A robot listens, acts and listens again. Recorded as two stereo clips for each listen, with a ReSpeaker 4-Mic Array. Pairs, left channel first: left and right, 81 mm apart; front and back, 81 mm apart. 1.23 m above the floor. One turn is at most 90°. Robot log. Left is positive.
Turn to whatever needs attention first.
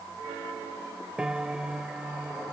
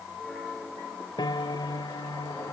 cmd idle
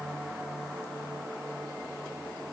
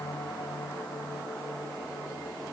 cmd idle
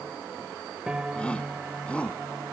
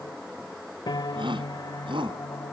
note: The shout: 165° left.
cmd yaw +90
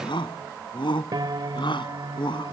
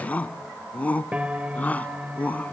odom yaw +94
note: The shout is now 75° left.
cmd yaw +75
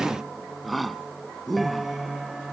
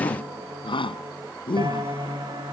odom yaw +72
end: Facing the shout.